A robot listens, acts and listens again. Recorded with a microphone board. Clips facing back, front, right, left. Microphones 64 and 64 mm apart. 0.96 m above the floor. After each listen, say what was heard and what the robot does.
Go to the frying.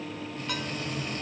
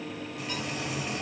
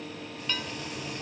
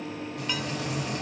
The frying: 85° left. Turn 85° left.
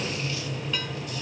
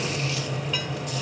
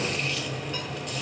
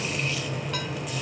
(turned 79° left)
Drive 1.0 m forward.
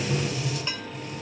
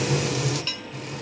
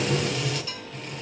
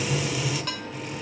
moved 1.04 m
Drive 1.0 m forward.
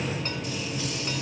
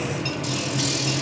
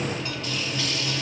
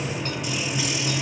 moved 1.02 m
The frying is now 15° left. Turn 15° left.
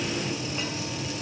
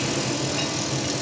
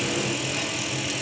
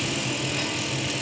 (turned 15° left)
Drive 1.0 m forward.
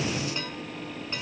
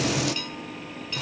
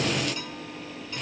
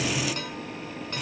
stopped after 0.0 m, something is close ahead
Arrived at the frying, straight ahead.